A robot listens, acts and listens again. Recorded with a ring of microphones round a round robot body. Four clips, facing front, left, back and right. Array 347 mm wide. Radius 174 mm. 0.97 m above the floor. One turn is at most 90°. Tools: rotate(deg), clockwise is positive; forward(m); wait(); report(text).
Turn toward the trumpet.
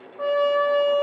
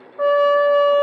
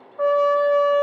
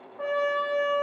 rotate(-90)
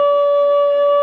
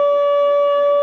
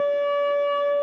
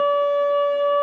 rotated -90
rotate(-40)
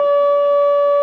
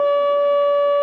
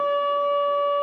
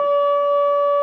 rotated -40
report("Found it: a trumpet, straight ahead, under 1 m away.")